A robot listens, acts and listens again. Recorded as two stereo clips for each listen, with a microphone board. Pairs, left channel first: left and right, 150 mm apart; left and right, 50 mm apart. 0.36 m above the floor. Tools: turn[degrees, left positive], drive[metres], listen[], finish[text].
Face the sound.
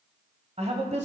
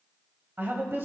Thought: The woman speaking: about 50° right or 130° right.
Action: turn[-50]
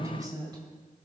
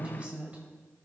Thought: So it is at 30° right.
Action: turn[-30]
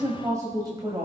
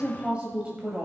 Thought: The woman speaking is now 30° right.
Action: turn[-30]
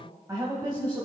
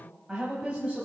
Thought: The woman speaking is now 25° right.
Action: turn[-25]
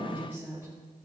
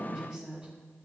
Thought: The woman speaking is now 15° right.
Action: turn[-15]
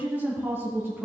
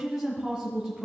Thought: The woman speaking is now 15° right.
Action: turn[-15]
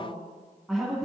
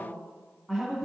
Action: finish[Found it: a woman speaking, straight ahead.]